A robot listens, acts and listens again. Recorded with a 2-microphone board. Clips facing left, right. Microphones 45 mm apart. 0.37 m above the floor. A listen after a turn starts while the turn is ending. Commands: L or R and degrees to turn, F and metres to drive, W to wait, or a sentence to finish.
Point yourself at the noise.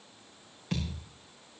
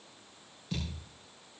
L60
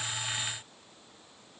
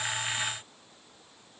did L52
W
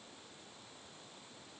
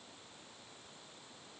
I heard a thud, but can't make it out now. It was about 5° left or 70° left.